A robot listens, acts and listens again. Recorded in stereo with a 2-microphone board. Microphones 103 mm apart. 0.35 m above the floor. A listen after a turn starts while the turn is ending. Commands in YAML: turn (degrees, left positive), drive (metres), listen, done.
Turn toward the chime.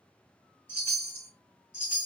turn: 20
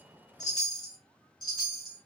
turn: 135
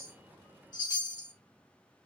turn: 50
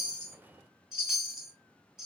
done: "Found it: a chime, straight ahead, 2 to 4 m away."